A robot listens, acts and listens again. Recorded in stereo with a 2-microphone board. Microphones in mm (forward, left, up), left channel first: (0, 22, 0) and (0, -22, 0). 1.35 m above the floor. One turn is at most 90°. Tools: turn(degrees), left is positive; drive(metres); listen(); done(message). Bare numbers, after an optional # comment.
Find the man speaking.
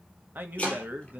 # The man speaking: about 35° right or 145° right.
turn(-35)
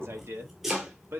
# So it is at 120° right.
turn(-90)
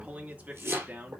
# The man speaking is now 35° right.
turn(-35)
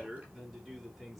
done("Facing the man speaking, 2 to 4 m away.")